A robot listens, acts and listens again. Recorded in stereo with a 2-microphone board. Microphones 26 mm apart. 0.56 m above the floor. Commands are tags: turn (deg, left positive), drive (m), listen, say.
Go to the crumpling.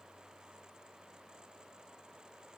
<listen/>
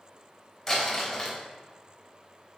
<turn deg="30"/>
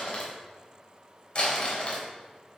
<turn deg="145"/>
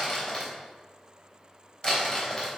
<turn deg="45"/>
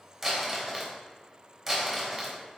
<drive m="1.0"/>
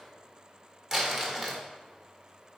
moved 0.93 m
<drive m="1.0"/>
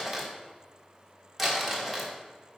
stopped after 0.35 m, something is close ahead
<say>Arrived at the crumpling, straight ahead.</say>